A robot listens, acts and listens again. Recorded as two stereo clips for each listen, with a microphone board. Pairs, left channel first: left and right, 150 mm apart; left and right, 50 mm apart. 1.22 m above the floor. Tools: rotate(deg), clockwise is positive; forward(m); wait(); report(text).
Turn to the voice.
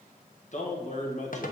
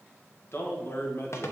rotate(-50)
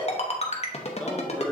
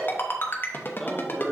wait()
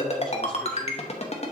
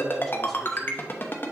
wait()
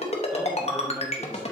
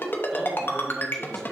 report("I heard a man speaking, but can't make it out now. It was about straight ahead or 80° left.")